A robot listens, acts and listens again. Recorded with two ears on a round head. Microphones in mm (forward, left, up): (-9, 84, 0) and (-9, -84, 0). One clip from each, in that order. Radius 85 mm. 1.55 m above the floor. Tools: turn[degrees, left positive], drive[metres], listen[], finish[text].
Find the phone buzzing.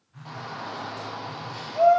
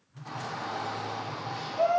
Action: turn[90]
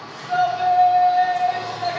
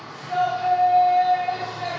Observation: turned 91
Action: listen[]
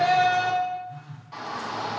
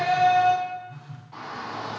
Thought: The phone buzzing is now 10° right.
Action: turn[-10]
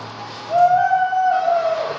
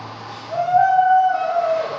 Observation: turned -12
Action: listen[]
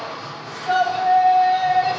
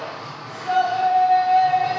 Action: listen[]
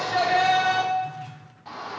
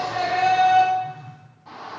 Action: finish[Facing the phone buzzing, under 1 m away.]